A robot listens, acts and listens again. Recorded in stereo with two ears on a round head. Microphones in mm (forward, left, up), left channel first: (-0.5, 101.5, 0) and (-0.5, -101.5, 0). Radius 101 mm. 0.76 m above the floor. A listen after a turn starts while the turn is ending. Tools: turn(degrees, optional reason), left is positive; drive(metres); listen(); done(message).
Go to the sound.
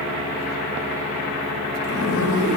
turn(degrees=90)
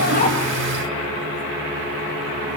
listen()
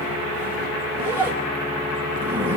turn(degrees=-10, reason="The zipper is now 10° right.")
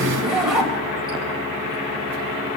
drive(metres=1.0)
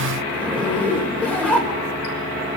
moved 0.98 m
drive(metres=1.0)
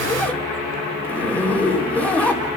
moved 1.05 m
drive(metres=1.0)
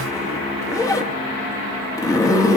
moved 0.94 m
turn(degrees=20, reason="The zipper is now 20° left.")
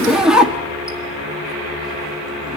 drive(metres=1.0)
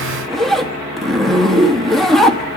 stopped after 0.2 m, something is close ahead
done("I am next to the zipper.")